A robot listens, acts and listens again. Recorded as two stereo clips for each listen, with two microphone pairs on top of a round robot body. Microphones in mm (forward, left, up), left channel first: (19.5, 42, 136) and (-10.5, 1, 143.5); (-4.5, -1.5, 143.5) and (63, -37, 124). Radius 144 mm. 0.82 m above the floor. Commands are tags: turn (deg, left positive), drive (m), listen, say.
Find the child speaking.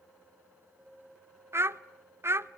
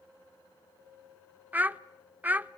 <turn deg="-90"/>
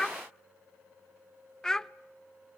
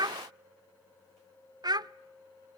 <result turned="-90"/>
<turn deg="-20"/>
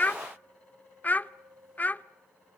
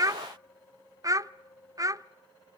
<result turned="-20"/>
<say>Found it: a child speaking, straight ahead.</say>